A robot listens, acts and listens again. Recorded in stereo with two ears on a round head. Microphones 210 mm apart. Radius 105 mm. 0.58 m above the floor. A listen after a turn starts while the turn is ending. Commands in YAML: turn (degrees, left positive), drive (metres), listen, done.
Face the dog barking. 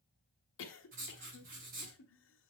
listen: true
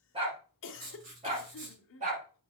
turn: -35
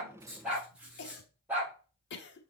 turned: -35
turn: -10
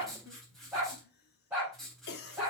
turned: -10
done: "Found it: a dog barking, straight ahead."